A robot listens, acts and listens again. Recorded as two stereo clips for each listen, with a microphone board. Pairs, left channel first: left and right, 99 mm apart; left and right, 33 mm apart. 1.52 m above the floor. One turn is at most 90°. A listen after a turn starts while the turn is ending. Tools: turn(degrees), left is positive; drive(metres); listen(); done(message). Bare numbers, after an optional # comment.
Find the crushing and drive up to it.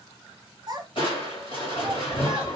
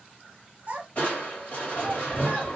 # The crushing: about 55° left or 125° left.
turn(55)
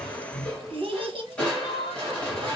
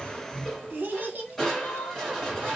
# So it is at 10° left.
turn(10)
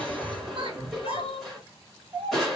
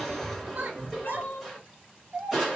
drive(1.0)
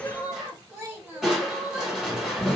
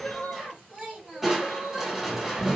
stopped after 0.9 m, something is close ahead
done("Arrived at the crushing, straight ahead.")